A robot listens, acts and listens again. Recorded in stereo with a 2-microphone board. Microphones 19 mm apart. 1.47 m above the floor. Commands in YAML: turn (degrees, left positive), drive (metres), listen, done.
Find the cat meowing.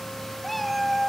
turn: 30
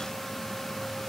listen: true
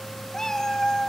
turn: 140
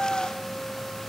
turn: 25
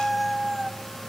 done: "Found it: a cat meowing, straight ahead, 1 to 2 m away."